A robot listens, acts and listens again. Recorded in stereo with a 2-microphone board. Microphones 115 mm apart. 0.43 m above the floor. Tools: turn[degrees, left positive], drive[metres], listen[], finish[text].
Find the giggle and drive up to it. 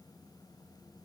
Action: listen[]
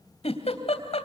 Thought: The giggle: about 65° left or 115° left.
Action: turn[65]
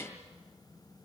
Action: listen[]
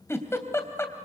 Thought: So it is at 25° left.
Action: turn[25]
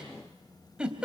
Thought: The giggle is now 10° right.
Action: turn[-10]
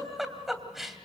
Action: drive[1.0]
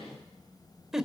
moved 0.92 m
Action: drive[1.0]
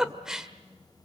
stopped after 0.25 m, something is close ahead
Action: finish[I am next to the giggle.]